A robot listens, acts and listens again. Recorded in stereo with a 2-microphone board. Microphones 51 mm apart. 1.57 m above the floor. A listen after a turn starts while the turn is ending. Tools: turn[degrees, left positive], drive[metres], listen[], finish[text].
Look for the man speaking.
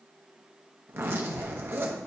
Action: listen[]
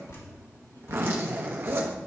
Action: listen[]
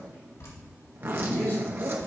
Thought: The man speaking: about 40° left or 140° left.
Action: turn[40]
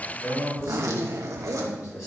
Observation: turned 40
Thought: So it is at 90° left.
Action: turn[90]
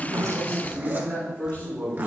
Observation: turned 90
Thought: The man speaking is now 35° left.
Action: turn[35]
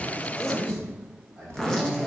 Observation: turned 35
Thought: The man speaking is now 15° right.
Action: turn[-15]
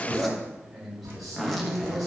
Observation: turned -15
Action: finish[Found it: a man speaking, straight ahead.]